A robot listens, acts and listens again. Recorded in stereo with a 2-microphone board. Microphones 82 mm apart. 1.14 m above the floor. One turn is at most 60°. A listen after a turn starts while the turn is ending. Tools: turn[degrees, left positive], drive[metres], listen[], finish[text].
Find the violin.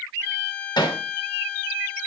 Thought: The violin: about 20° left or 160° left.
Action: turn[20]
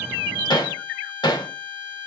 Thought: So it is at 140° left.
Action: turn[60]
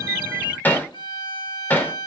Thought: The violin is now 80° left.
Action: turn[60]
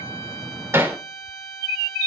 Thought: The violin is now 25° left.
Action: turn[25]
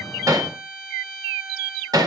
Action: finish[Found it: a violin, straight ahead.]